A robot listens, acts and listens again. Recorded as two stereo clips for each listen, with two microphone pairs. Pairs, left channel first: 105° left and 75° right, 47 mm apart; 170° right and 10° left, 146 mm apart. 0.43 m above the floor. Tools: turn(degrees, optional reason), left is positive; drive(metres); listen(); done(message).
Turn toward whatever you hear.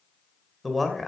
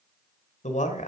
turn(degrees=-170, reason="The man speaking: 170° right.")
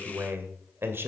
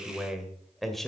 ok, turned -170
turn(degrees=-85, reason="The man speaking is now 85° right.")
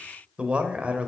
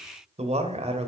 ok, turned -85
turn(degrees=-20, reason="The man speaking is now 20° right.")
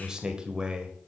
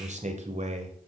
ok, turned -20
turn(degrees=-10, reason="The man speaking is now 10° right.")
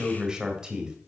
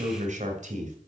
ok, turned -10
done("Found it: a man speaking, straight ahead.")